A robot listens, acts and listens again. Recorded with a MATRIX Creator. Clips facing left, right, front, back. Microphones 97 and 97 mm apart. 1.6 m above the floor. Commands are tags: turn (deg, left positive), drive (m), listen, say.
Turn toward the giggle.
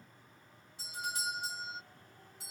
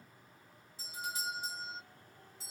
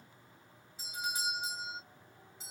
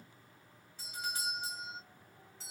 <listen/>
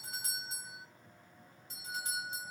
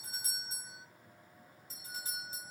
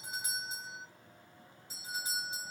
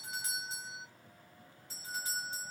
<listen/>
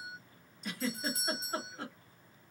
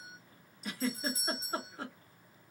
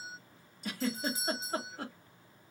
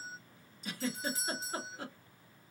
<say>Facing the giggle.</say>